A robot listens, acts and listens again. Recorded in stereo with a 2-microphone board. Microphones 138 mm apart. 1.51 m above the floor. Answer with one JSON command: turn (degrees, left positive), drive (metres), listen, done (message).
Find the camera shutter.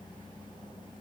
{"listen": true}
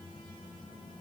{"listen": true}
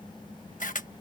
{"turn": 70}
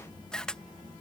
{"done": "Found it: a camera shutter, straight ahead."}